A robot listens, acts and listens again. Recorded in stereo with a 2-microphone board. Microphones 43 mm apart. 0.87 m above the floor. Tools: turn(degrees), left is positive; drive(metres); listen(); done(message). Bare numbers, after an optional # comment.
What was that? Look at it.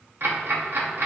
# The ticking: about 60° right or 120° right.
turn(-60)
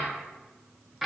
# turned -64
done("Found it: ticking, straight ahead, under 1 m away.")